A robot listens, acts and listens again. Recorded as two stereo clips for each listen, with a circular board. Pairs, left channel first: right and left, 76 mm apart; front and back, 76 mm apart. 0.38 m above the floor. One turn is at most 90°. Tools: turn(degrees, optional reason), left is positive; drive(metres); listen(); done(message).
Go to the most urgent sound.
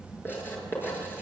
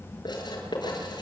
listen()
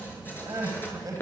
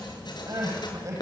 turn(degrees=90, reason="The crying: 140° left.")
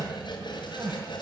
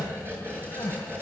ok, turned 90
turn(degrees=50, reason="The crying is now 50° left.")
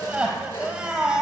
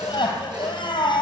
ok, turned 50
turn(degrees=15, reason="The crying is now 15° left.")
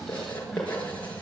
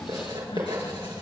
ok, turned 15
listen()
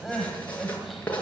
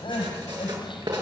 drive(metres=1.0)
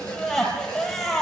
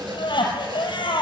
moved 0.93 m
drive(metres=1.0)
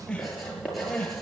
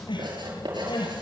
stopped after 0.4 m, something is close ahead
turn(degrees=-10, reason="The crying is now 10° right.")
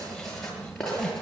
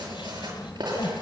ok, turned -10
listen()
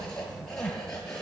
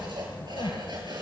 done("Something is in my way. I am facing the crying but have not reached it.")